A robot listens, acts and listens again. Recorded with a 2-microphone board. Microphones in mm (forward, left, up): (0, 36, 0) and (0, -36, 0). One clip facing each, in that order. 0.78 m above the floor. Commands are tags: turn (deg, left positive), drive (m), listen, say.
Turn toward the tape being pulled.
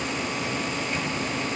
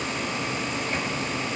<listen/>
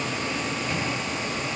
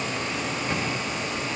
<listen/>
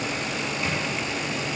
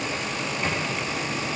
<say>I can't make out tape being pulled.</say>